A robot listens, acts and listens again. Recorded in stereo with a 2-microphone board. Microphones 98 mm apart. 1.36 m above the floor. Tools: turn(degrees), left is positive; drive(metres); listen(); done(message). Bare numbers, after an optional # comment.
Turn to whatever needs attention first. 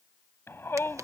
# The shout: about 25° left or 155° left.
turn(25)
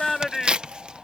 done("Facing the shout.")